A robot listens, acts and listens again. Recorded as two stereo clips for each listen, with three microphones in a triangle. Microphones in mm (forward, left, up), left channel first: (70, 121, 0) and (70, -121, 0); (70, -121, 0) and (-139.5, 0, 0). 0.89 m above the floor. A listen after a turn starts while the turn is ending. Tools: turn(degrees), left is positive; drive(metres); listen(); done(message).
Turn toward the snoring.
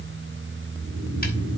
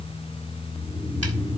turn(degrees=-110)
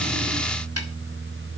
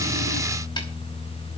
listen()
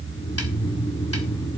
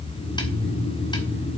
turn(degrees=10)
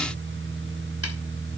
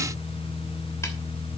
listen()
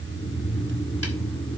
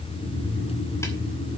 done("Facing the snoring.")